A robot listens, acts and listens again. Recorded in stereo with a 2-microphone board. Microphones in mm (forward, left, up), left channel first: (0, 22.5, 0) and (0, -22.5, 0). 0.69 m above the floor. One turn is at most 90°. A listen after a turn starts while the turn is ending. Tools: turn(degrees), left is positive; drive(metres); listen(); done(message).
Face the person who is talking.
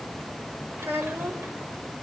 turn(degrees=-55)
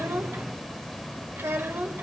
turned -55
turn(degrees=-70)
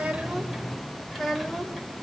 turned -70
done("Found it: a child speaking, straight ahead, 1 to 2 m away.")